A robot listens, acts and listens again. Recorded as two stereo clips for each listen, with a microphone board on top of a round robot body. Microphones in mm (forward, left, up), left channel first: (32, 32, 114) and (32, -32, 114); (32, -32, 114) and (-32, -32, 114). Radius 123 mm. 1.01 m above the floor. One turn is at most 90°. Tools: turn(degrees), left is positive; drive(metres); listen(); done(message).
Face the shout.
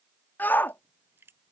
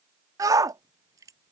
turn(degrees=90)
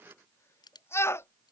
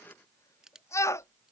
turn(degrees=40)
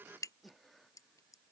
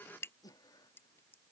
listen()
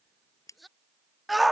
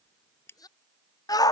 done("Found it: a shout, straight ahead.")